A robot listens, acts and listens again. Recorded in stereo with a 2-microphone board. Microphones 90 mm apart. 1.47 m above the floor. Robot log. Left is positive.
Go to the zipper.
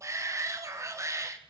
cmd idle
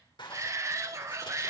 note: The zipper: about 60° left or 120° left.
cmd yaw +60
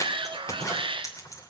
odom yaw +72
note: So it is at 45° left.
cmd yaw +45
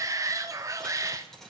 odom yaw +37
cmd fwd 1.0
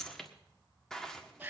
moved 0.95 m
note: The zipper is now 10° left.
cmd yaw +10
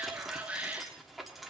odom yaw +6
cmd fwd 1.0
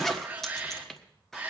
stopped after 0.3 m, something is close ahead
end: I am next to the zipper.